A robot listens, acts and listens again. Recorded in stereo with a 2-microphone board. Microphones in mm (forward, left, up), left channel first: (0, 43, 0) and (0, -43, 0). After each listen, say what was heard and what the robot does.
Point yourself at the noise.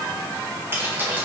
The keys jangling: about 25° right or 155° right. Turn 25° right.
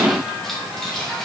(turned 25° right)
Found it: keys jangling, straight ahead, over 4 m away.